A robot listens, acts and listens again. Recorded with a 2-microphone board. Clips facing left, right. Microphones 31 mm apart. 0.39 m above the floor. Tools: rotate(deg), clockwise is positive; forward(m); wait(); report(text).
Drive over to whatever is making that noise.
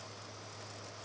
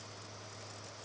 wait()
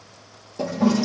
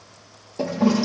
rotate(30)
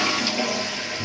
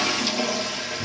rotate(-20)
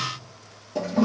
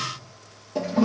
forward(1.0)
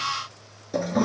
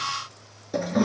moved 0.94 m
forward(1.0)
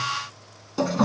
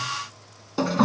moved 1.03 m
rotate(15)
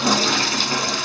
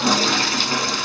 forward(1.0)
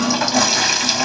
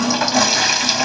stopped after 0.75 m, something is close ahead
report("I am next to the toilet flushing.")